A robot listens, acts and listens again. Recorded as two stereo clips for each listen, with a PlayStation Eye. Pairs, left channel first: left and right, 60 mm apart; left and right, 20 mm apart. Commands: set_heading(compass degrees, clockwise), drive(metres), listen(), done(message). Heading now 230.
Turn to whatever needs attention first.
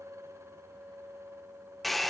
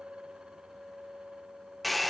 listen()
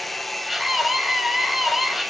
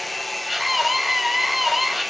set_heading(260)
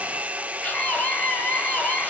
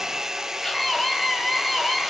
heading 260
set_heading(235)
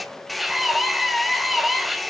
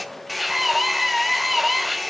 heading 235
done("Found it: a scream, straight ahead, 2 to 4 m away.")